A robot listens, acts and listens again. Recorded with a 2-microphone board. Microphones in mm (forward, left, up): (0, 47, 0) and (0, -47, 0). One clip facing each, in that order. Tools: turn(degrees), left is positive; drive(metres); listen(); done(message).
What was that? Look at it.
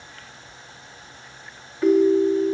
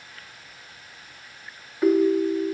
turn(degrees=-30)
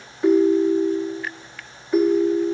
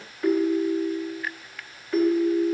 turn(degrees=15)
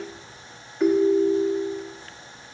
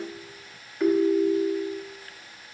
done("Found it: a ringtone, straight ahead, under 1 m away.")